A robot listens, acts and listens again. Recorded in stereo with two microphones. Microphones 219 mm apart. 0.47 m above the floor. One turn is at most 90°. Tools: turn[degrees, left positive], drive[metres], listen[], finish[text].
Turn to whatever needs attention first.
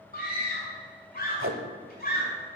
Thought: The scream: about 40° left or 140° left.
Action: turn[40]
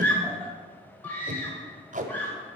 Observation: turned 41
Thought: So it is at 10° left.
Action: turn[10]
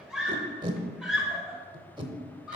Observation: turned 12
Action: finish[Found it: a scream, straight ahead, 1 to 2 m away.]